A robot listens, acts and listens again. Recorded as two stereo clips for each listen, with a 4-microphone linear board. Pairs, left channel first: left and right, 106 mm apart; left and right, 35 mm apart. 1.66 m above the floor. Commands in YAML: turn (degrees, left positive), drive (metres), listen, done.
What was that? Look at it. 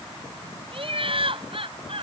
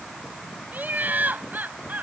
turn: -60
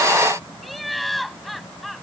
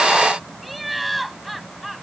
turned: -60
done: "Facing the laughter."